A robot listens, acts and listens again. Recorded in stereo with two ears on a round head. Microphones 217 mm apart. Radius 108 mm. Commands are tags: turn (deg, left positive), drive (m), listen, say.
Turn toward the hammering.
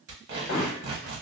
<turn deg="50"/>
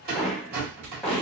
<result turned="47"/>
<say>Found it: hammering, straight ahead, under 1 m away.</say>